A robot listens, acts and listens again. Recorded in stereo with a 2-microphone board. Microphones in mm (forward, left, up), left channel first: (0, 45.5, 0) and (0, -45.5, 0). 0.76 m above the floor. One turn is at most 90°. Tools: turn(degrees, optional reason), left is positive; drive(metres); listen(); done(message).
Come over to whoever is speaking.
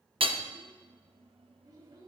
turn(degrees=-50, reason="The child speaking: about 50° right or 130° right.")
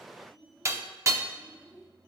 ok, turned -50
drive(metres=1.0)
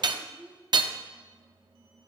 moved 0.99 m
drive(metres=1.0)
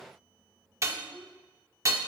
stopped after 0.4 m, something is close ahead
done("Arrived at the child speaking, straight ahead.")